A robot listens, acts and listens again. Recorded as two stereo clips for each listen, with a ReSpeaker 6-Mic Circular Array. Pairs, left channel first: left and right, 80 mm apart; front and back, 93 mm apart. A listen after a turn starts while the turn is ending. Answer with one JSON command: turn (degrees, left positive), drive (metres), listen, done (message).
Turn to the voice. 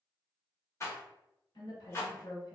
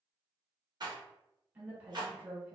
{"turn": 105}
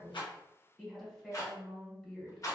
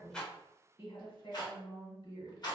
{"done": "Facing the woman speaking."}